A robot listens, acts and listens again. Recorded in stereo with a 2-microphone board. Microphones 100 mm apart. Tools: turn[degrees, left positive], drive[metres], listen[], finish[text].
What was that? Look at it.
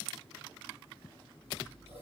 Action: turn[-90]
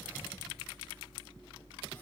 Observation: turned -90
Thought: So it is at 10° left.
Action: turn[10]
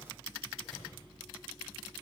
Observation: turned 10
Action: finish[Facing the scissors.]